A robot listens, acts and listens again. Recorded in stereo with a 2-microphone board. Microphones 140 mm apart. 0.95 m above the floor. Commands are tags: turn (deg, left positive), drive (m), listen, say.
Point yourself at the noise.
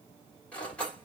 <turn deg="30"/>
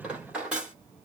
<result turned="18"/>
<turn deg="-10"/>
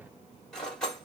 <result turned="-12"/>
<say>Found it: cutlery clinking, straight ahead, 1 to 2 m away.</say>